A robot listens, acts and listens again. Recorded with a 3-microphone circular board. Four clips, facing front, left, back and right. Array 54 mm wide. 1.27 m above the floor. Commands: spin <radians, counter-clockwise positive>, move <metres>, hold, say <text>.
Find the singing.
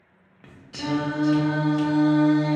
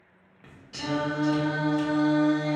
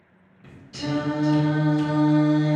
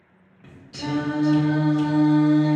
spin 0.70
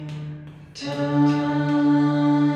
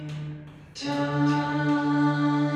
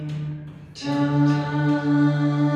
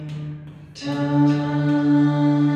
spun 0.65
spin -0.61
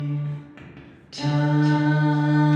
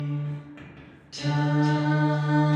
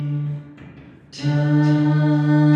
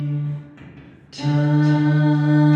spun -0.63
spin -0.44
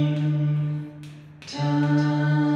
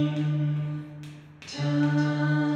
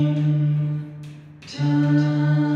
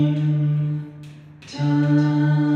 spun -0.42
say Found it: singing, straight ahead, 1 to 2 m away.